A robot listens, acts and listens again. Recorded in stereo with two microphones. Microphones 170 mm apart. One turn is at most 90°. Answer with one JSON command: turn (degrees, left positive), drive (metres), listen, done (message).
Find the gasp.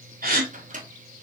{"turn": -60}
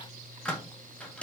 {"listen": true}
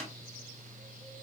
{"done": "I heard a gasp, but can't make it out now. It was about straight ahead or 60° right."}